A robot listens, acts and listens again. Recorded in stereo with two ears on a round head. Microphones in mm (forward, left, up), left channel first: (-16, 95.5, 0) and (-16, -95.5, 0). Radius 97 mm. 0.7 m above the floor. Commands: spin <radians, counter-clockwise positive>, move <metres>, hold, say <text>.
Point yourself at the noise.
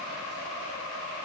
hold
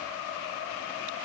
hold
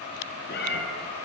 spin 0.87
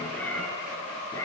spin 0.26
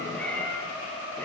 spin 0.17
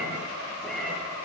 say Found it: a cat meowing, straight ahead.